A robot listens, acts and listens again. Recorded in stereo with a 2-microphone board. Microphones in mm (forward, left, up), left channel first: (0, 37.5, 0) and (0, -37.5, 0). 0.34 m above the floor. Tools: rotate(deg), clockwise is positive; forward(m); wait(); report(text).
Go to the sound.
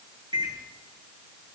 rotate(70)
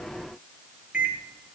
rotate(15)
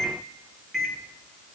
forward(1.0)
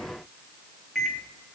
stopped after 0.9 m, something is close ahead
report("Arrived at the microwave, straight ahead.")